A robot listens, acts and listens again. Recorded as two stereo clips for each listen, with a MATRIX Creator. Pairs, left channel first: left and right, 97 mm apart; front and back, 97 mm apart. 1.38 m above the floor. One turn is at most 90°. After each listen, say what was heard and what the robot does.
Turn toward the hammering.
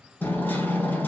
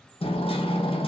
The hammering: 20° left. Turn 20° left.
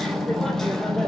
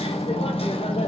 Found it: hammering, straight ahead.